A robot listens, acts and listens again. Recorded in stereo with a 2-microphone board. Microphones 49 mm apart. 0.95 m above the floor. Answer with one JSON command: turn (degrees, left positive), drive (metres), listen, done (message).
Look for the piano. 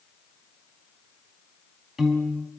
{"turn": -30}
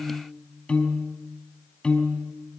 {"turn": 20}
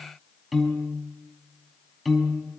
{"done": "Found it: a piano, straight ahead."}